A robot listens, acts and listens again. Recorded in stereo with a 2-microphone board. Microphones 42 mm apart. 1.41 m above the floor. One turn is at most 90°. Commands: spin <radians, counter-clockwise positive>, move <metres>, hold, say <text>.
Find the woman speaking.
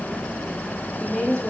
spin 0.35
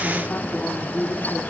spin 1.57
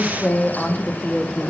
say Facing the woman speaking.